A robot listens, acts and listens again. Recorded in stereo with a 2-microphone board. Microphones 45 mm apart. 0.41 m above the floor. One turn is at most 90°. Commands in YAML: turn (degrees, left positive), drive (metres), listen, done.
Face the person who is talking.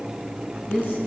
turn: 45
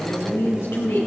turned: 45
turn: 90
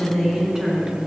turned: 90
turn: -10
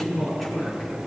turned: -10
done: "Found it: a woman speaking, straight ahead."